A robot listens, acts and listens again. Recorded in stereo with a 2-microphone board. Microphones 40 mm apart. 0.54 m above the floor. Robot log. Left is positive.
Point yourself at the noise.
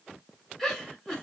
cmd yaw +30
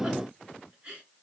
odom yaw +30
note: So it is at 20° right.
cmd yaw -20
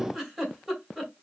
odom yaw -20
end: Found it: a giggle, straight ahead, 2 to 4 m away.